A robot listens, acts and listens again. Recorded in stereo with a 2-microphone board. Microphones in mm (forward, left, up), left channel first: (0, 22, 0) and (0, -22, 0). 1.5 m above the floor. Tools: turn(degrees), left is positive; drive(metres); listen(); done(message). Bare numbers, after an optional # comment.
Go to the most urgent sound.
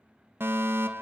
# The fire alarm: about 60° right or 120° right.
turn(-60)
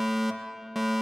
drive(1.0)
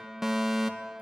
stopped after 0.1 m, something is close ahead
done("Blocked. The fire alarm is further on, straight ahead.")